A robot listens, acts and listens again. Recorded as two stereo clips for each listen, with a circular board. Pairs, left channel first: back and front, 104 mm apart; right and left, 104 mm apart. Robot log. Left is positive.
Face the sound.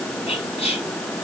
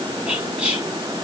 note: The whispering: 170° left.
cmd yaw +170
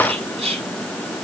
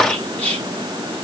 note: The whispering is now 15° right.
cmd yaw -15
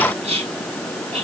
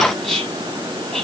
end: Facing the whispering, over 4 m away.